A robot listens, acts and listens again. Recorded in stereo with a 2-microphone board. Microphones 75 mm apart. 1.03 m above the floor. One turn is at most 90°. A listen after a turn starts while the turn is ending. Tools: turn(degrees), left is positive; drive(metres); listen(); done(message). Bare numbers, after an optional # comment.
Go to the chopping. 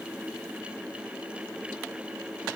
listen()
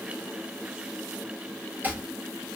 # The chopping: about 20° right or 160° right.
turn(-20)
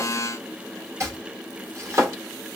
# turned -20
# So it is at 140° right.
turn(-90)
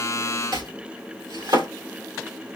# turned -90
# The chopping is now 75° right.
turn(-75)
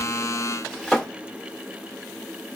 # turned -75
drive(1.0)
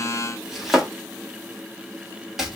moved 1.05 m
drive(1.0)
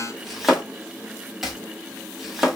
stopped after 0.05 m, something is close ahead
done("Arrived at the chopping, straight ahead.")